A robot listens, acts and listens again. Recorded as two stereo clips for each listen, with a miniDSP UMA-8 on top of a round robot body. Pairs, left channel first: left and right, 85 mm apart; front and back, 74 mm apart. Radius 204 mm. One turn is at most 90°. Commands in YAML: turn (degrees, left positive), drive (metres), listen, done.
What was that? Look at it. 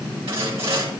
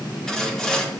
turn: -80
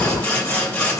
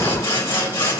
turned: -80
turn: 25
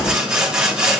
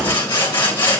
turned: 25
turn: -15
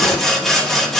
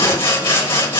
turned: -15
done: "Found it: sawing, straight ahead, 2 to 4 m away."